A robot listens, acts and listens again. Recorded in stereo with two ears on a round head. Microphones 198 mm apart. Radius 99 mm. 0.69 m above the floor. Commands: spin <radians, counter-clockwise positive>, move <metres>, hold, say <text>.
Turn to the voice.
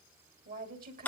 spin -0.79
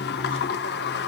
hold
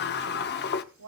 spin -1.66
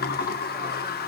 hold
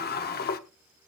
hold
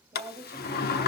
spin -0.17
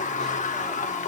hold
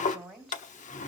say Facing the woman speaking, 2 to 4 m away.